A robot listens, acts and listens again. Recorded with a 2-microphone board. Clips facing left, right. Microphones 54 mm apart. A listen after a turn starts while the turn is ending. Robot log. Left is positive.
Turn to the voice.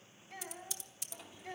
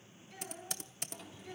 note: The child speaking: about 50° left or 130° left.
cmd yaw +50
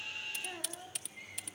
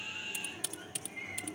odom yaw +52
cmd idle
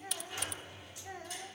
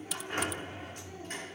cmd idle
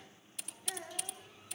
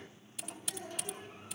note: So it is at 45° left.
cmd yaw +45
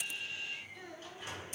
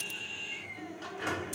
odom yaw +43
cmd idle
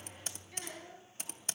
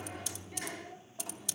cmd idle
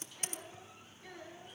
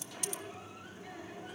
end: I heard a child speaking from this way, but can't make it out now.